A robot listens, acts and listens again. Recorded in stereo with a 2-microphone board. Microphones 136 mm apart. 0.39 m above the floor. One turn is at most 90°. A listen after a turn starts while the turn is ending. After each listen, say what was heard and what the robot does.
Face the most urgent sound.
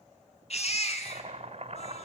The baby crying: about 50° left or 130° left. Turn 50° left.
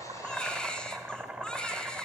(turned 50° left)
Facing the baby crying, 2 to 4 m away.